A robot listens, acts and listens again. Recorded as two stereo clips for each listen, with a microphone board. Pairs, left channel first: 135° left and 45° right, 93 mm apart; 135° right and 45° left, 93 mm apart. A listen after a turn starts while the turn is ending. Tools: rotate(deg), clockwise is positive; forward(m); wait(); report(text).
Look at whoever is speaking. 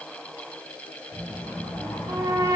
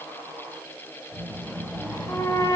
rotate(15)
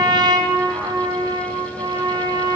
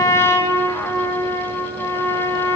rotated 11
wait()
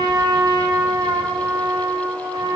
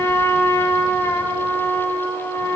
wait()
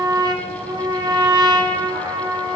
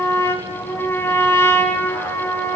report("I heard a child speaking from this way, but can't make it out now.")